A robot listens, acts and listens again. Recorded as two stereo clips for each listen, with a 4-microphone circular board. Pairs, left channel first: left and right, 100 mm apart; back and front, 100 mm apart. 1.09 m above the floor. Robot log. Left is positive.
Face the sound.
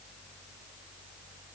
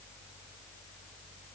cmd idle
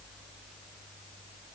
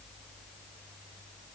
cmd idle
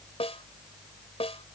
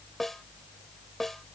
note: The snare drum: 90° left.
cmd yaw +90
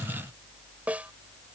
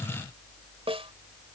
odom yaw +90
note: The snare drum is now 15° right.
cmd yaw -15
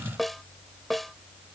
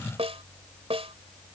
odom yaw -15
end: Facing the snare drum.